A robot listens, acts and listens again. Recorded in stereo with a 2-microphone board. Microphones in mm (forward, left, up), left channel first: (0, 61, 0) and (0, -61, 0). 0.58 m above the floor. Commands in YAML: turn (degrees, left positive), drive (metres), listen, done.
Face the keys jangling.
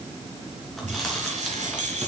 turn: -90
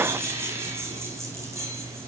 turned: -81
turn: -25
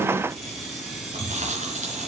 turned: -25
done: "Found it: keys jangling, straight ahead, over 4 m away."